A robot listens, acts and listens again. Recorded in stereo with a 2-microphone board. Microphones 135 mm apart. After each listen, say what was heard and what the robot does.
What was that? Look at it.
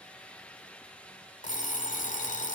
The alarm clock: about 75° left or 105° left. Turn 75° left.
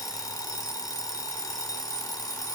So it is at 30° left. Turn 30° left.
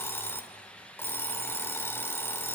The alarm clock is now 20° left. Turn 20° left.
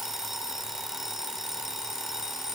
Facing the alarm clock.